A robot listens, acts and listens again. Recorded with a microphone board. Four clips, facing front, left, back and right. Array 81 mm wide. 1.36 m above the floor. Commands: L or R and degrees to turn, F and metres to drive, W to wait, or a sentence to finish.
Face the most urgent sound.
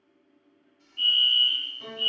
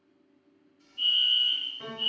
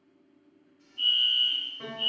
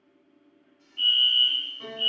R55
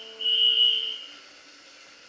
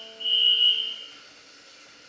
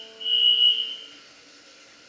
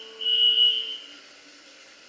R30
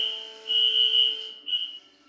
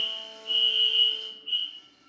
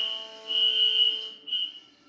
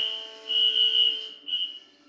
Facing the fire alarm, 1 to 2 m away.